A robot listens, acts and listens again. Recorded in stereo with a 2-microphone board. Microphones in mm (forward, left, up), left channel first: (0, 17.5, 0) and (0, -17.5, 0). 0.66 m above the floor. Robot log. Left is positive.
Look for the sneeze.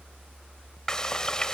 cmd idle
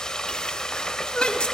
note: The sneeze: about 25° left or 155° left.
cmd yaw +25
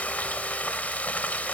cmd idle
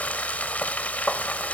end: I heard a sneeze, but can't make it out now. It was about straight ahead or 130° left.